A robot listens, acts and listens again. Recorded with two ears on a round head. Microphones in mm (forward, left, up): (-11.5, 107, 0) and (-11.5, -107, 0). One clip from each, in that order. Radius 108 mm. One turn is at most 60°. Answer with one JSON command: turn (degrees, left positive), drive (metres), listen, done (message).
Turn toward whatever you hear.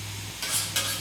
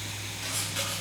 {"turn": 45}
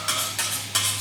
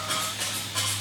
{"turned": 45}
{"turn": 60}
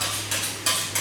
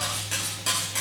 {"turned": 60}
{"turn": 15}
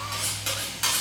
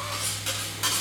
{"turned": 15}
{"done": "Facing the cutlery clinking, over 4 m away."}